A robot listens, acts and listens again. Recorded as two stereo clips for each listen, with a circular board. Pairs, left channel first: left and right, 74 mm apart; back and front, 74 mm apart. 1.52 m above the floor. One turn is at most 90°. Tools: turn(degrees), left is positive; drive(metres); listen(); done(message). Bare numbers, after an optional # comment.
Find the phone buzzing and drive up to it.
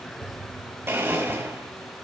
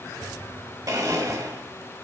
listen()
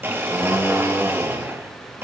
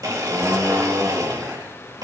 listen()
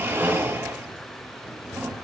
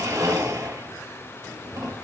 done("I can't make out a phone buzzing, only a blender.")